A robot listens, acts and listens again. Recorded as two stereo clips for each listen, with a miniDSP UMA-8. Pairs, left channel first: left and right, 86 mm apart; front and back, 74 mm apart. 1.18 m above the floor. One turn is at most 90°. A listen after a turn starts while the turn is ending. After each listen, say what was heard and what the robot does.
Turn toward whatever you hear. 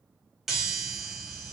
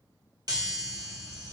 The chime: 175° right. Turn 90° right.
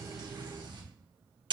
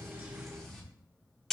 The chime is now 85° right. Turn 85° right.
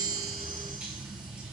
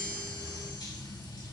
The chime is now 15° right. Turn 15° right.
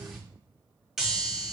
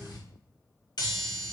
Facing the chime, 1 to 2 m away.